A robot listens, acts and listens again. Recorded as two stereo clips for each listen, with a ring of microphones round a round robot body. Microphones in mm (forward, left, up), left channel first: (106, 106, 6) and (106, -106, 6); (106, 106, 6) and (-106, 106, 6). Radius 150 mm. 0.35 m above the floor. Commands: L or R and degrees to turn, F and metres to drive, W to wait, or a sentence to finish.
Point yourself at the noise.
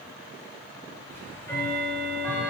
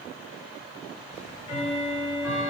L10
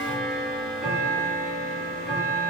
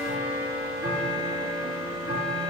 Found it: ticking, straight ahead, 1 to 2 m away.